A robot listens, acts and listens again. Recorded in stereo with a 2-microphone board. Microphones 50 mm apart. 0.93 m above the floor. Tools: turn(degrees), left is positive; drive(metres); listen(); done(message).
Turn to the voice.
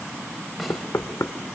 listen()
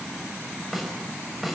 listen()
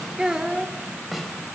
turn(degrees=-30)
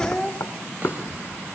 turn(degrees=15)
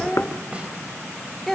done("Found it: a child speaking, straight ahead.")